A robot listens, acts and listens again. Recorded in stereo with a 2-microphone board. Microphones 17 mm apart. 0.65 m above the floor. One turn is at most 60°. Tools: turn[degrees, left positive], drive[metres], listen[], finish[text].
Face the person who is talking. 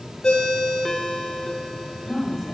Action: turn[30]
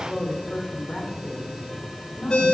Thought: So it is at 120° left.
Action: turn[60]
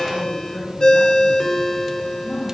Thought: The woman speaking is now 40° left.
Action: turn[40]
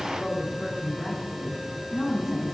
Action: finish[Found it: a woman speaking, straight ahead.]